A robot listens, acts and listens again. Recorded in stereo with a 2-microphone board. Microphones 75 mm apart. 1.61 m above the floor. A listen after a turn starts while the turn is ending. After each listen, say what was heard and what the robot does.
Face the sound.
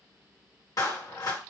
The clap: about 55° left or 125° left. Turn 55° left.
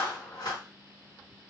So it is at 70° left. Turn 70° left.
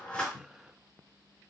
Keep listening.
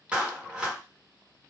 The clap is now 10° right. Turn 10° right.
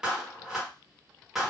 Found it: a clap, straight ahead, 1 to 2 m away.